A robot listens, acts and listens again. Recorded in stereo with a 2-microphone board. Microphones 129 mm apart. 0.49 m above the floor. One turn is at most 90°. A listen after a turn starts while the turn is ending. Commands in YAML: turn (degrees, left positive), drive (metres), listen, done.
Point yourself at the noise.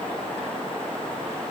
listen: true
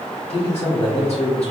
turn: 60
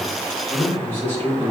turn: 15
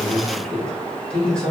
done: "Found it: a man speaking, straight ahead, 1 to 2 m away."